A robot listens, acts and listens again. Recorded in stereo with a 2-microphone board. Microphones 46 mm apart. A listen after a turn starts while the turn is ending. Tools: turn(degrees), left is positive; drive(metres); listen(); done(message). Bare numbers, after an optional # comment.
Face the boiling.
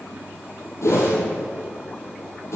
listen()
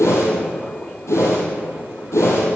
listen()
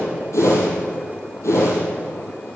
done("I can't make out boiling to turn to.")